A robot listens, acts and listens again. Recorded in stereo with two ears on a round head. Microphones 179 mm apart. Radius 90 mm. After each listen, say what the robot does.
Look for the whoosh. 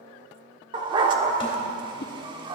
Turn 55° left.
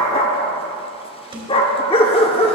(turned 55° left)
Keep listening.
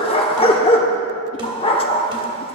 Keep listening.
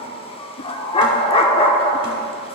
I heard a whoosh, but can't make it out now. It was about straight ahead or 70° left.